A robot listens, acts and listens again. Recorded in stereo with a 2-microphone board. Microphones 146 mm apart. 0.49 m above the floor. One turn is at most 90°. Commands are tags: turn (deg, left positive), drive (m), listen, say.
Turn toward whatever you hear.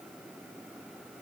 <listen/>
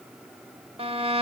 <turn deg="-40"/>
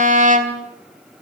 <turn deg="-90"/>
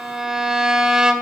<say>Facing the violin.</say>